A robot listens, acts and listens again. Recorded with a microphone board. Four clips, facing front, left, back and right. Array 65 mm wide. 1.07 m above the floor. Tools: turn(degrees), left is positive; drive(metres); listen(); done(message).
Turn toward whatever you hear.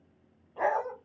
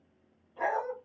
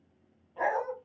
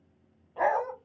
turn(degrees=-85)
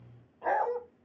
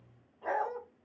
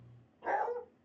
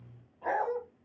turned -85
done("Found it: a dog barking, straight ahead.")